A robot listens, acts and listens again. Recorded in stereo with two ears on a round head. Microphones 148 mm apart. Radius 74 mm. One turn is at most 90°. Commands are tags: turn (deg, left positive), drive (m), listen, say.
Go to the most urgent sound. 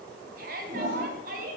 <turn deg="-55"/>
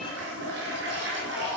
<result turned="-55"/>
<listen/>
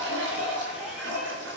<listen/>
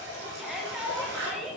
<drive m="1.0"/>
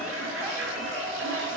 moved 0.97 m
<listen/>
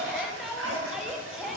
<drive m="1.0"/>
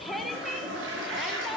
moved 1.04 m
<drive m="1.0"/>
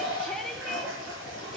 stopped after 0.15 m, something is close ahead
<say>I am next to the shout.</say>